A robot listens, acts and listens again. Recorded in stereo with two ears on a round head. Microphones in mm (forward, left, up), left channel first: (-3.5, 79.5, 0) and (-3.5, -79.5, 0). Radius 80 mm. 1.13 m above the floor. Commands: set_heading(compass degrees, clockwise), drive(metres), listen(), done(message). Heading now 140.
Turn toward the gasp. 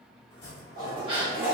set_heading(170)
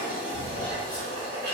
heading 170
listen()
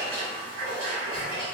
done("I heard a gasp, but can't make it out now. It was about straight ahead or 120° right.")